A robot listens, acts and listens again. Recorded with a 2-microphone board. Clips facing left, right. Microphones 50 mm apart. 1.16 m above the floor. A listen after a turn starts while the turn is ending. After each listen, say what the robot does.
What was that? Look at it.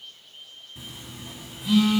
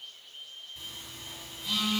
Turn 30° left.
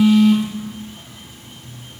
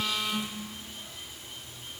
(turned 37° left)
Turn 130° left.
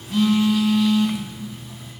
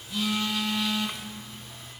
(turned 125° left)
Facing the phone buzzing, 2 to 4 m away.